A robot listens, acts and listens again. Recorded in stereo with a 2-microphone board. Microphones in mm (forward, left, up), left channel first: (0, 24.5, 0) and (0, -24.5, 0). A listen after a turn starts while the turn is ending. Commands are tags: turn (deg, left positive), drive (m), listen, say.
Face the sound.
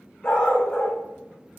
<turn deg="15"/>
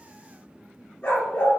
<turn deg="20"/>
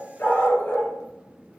<turn deg="140"/>
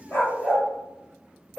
<say>Facing the dog barking, over 4 m away.</say>